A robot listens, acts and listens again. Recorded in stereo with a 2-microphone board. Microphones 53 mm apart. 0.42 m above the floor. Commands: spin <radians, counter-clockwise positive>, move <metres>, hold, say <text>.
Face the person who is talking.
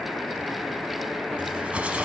hold
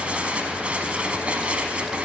hold
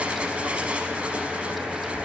say I can't make out anyone speaking to turn to.